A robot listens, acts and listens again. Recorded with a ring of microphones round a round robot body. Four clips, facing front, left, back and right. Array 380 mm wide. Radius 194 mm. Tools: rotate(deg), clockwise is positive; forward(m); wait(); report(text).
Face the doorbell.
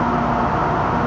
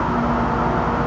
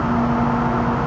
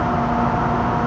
wait()
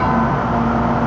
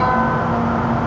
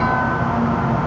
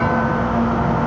wait()
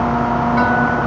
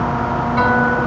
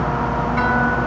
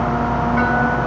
report("I can't make out a doorbell to turn to.")